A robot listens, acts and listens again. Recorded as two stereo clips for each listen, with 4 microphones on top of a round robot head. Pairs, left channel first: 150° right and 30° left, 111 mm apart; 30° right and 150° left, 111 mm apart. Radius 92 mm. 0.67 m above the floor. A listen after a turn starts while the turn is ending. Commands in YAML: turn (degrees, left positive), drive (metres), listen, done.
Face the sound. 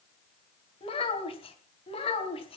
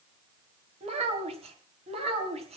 turn: 175
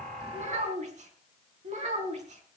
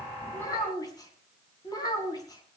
turn: 20
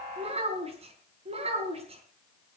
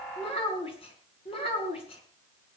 done: "Found it: a child speaking, straight ahead."